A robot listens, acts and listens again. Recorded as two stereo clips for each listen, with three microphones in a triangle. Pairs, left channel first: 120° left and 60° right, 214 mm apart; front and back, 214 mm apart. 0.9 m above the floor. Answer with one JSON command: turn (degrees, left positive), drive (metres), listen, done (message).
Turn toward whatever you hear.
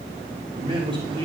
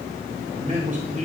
{"turn": -125}
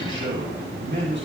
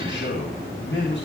{"turn": -30}
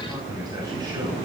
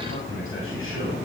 {"listen": true}
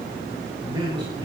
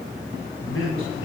{"turn": 10}
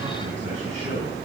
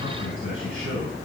{"done": "Found it: a man speaking, straight ahead, over 4 m away."}